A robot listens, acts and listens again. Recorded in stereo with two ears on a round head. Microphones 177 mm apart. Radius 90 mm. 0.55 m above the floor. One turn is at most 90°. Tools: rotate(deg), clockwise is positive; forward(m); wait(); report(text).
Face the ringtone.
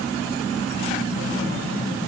wait()
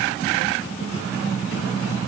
wait()
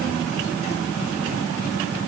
report("I can't make out a ringtone.")